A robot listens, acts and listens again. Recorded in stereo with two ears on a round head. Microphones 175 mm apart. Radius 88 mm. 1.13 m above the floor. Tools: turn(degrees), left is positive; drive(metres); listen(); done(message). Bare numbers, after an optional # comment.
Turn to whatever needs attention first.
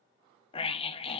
# The scream: about 30° left or 150° left.
turn(30)
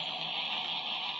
done("Found it: a scream, straight ahead, 1 to 2 m away.")